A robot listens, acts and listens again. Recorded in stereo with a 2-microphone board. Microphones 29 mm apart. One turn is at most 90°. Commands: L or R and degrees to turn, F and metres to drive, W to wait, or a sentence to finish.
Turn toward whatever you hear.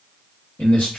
L65
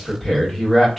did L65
Facing the man speaking.